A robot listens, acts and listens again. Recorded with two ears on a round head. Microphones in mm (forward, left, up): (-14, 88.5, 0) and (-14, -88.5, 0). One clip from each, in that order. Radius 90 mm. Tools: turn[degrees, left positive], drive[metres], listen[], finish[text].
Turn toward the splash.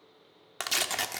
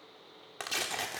Action: listen[]
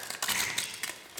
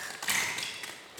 Action: turn[-30]
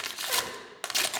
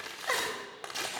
Action: listen[]
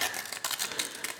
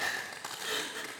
Action: finish[I heard a splash, but can't make it out now. It was about 20° left or 140° right.]